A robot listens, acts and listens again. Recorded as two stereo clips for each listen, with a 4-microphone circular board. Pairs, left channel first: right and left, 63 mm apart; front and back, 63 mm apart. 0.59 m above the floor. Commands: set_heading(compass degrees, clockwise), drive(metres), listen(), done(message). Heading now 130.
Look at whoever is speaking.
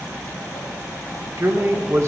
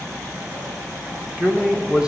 set_heading(20)
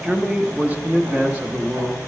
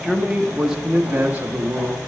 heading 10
set_heading(230)
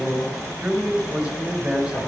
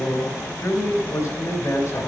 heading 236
set_heading(221)
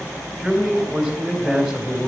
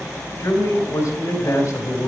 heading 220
done("Facing the man speaking, 2 to 4 m away.")